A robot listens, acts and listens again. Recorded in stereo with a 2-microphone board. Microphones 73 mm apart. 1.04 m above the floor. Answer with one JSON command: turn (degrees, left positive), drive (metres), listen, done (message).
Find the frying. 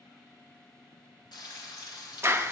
{"turn": 90}
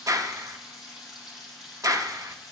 {"done": "Found it: frying, straight ahead."}